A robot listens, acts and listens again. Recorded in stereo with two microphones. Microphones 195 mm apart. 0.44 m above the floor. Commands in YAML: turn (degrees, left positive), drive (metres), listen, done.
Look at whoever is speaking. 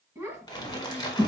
turn: -20
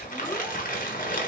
listen: true
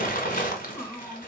done: "Found it: a child speaking, straight ahead."